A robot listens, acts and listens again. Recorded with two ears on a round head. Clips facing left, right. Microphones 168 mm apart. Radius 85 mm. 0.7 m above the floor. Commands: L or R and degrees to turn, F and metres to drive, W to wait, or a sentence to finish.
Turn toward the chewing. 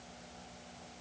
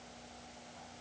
W
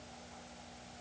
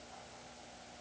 W
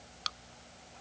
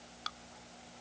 L40
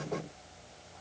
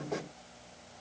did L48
W
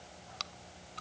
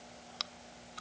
Facing the chewing.